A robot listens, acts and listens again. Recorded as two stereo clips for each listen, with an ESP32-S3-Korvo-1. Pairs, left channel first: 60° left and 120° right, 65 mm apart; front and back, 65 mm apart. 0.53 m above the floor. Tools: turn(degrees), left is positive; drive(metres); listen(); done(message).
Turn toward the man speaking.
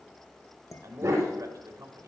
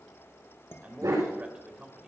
turn(degrees=-105)
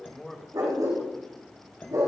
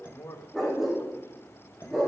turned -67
turn(degrees=-25)
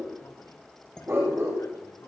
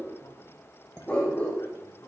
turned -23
listen()
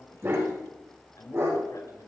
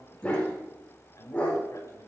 turn(degrees=30)
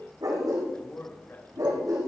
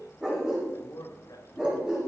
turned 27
done("Found it: a man speaking, straight ahead, over 4 m away.")